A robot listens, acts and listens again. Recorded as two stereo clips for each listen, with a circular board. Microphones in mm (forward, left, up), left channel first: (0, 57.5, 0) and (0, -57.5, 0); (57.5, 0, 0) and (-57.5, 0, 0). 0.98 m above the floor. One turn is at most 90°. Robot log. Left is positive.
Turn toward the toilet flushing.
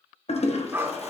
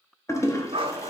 note: The toilet flushing: 65° left.
cmd yaw +65
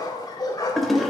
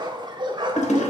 end: Found it: a toilet flushing, straight ahead.